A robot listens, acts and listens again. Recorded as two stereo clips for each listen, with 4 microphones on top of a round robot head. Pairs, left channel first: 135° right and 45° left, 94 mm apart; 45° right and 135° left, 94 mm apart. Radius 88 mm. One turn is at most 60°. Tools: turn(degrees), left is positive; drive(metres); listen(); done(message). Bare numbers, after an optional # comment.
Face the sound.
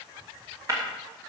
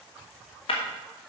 # The breaking glass: 10° right.
turn(-10)
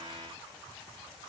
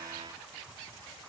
done("Facing where the breaking glass came from. I can't hear it now.")